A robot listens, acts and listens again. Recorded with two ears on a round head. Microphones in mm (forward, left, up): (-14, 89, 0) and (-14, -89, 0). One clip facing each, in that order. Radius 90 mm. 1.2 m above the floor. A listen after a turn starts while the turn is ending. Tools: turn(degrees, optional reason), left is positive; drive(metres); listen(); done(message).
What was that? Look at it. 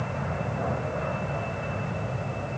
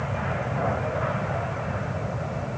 listen()
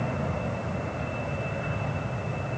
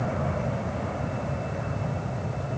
listen()
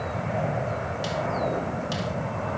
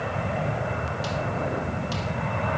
done("I can't make out anything.")